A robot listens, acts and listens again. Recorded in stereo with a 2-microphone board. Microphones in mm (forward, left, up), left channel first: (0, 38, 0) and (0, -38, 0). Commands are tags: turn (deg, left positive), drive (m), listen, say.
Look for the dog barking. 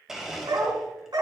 <turn deg="-65"/>
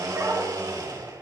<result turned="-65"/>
<turn deg="-40"/>
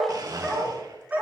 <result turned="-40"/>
<turn deg="-20"/>
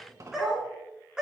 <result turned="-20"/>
<turn deg="-10"/>
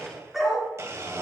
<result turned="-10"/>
<say>Found it: a dog barking, straight ahead.</say>